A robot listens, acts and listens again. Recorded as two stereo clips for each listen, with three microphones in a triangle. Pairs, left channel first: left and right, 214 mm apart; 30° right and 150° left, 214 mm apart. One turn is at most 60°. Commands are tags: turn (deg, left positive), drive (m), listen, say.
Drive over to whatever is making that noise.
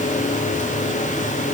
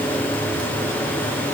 <listen/>
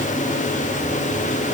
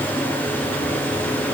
<listen/>
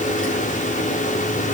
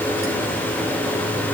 <say>I can't make out anything to turn to.</say>